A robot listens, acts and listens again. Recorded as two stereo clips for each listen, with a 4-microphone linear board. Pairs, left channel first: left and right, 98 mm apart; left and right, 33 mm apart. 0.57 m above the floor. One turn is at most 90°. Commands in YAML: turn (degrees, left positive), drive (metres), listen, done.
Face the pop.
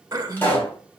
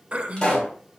turn: 20
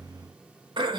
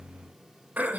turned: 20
listen: true
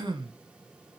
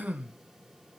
done: "I heard a pop, but can't make it out now. It was about straight ahead or 140° left."